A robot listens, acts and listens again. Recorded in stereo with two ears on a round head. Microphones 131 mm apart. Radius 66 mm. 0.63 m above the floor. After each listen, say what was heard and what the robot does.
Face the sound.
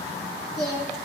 Turn 30° right.
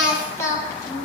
So it is at 20° left. Turn 20° left.
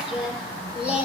The singing is now 10° right. Turn 10° right.
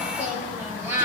The singing is now 15° right. Turn 15° right.
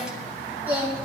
The singing is now 15° right. Turn 15° right.
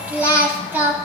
The singing is now 15° right. Turn 15° right.
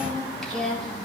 Found it: singing, straight ahead.